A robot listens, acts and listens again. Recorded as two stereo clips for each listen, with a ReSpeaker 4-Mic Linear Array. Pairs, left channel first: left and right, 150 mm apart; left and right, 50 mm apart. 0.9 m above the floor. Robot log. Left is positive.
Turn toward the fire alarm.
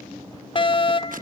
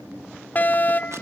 note: The fire alarm: about 35° left or 145° left.
cmd yaw +35
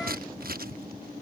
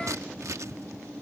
cmd idle
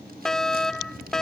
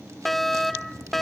end: Found it: a fire alarm, straight ahead.